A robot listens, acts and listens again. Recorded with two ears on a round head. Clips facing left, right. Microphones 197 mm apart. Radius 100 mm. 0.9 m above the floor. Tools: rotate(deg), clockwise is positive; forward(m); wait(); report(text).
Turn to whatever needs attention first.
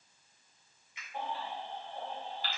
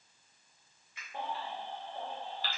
rotate(70)
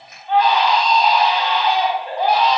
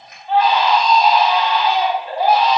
report("Facing the baby crying, 1 to 2 m away.")